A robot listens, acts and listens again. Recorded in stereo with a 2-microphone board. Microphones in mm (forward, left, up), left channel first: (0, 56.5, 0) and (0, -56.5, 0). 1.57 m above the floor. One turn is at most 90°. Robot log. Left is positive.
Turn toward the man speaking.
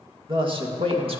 note: The man speaking: about 55° right or 125° right.
cmd yaw -55
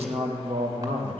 note: So it is at 50° right.
cmd yaw -50
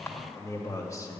note: The man speaking is now 30° left.
cmd yaw +30
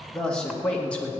note: The man speaking is now 10° left.
cmd yaw +10
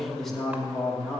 end: Facing the man speaking, 2 to 4 m away.